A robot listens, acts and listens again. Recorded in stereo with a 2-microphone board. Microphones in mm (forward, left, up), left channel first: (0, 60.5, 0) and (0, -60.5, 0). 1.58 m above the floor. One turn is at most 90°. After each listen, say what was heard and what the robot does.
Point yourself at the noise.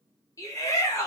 The shout: about 25° left or 155° left. Turn 25° left.
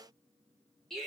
Found it: a shout, straight ahead.